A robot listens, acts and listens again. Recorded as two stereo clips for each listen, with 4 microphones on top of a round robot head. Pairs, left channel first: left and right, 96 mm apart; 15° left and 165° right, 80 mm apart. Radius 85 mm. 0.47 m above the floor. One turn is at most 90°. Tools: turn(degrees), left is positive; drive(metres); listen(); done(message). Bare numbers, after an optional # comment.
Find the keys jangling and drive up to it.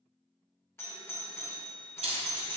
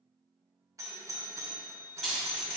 # The keys jangling: 75° right.
turn(-75)
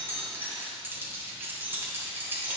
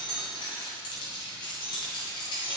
# The keys jangling is now 25° right.
turn(-25)
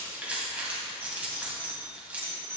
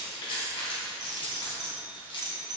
# The keys jangling is now 15° right.
turn(-15)
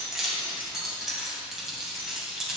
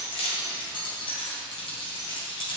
drive(1.0)
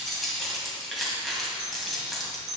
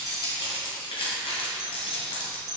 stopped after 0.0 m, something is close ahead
done("Something is in my way. I am facing the keys jangling but have not reached it.")